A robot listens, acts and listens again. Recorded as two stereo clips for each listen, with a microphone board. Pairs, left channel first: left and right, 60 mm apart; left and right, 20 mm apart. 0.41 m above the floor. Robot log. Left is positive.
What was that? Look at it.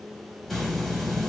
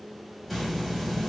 cmd yaw +30
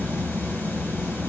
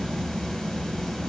note: So it is at 145° left.
cmd yaw +145
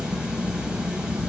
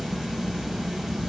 note: The hiss is now 20° right.
cmd yaw -20
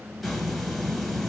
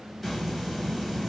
end: Facing the hiss, under 1 m away.